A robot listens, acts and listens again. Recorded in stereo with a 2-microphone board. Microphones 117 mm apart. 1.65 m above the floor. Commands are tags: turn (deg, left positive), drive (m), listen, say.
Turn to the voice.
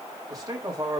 <turn deg="-30"/>
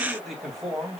<say>Found it: a man speaking, straight ahead, 2 to 4 m away.</say>